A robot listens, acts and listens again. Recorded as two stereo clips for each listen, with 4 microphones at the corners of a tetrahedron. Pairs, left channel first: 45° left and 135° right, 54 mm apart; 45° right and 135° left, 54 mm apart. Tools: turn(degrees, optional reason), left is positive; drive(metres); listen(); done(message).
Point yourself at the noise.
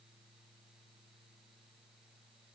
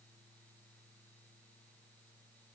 listen()
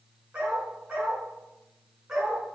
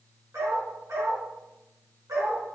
turn(degrees=145, reason="The dog barking: 145° left.")
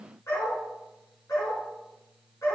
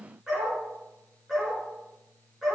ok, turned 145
turn(degrees=45, reason="The dog barking is now 45° left.")
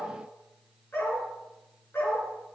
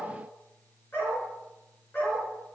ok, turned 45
done("Found it: a dog barking, straight ahead.")